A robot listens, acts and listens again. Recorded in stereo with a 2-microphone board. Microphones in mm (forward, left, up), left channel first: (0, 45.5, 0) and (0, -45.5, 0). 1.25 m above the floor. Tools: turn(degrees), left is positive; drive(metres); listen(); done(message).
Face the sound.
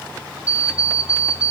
turn(degrees=30)
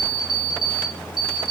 turn(degrees=115)
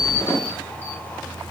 turn(degrees=25)
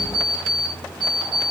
done("Facing the alarm clock, 1 to 2 m away.")